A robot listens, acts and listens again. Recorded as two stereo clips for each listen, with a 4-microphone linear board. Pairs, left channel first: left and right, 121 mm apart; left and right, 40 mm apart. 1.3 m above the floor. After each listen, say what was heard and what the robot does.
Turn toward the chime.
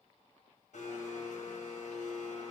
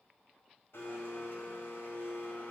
Keep listening.
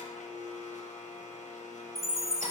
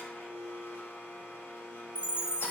The chime: about 30° right or 150° right. Turn 30° right.
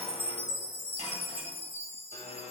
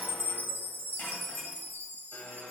So it is at 120° right. Turn 120° right.
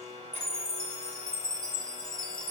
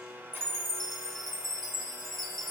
Found it: a chime, straight ahead, under 1 m away.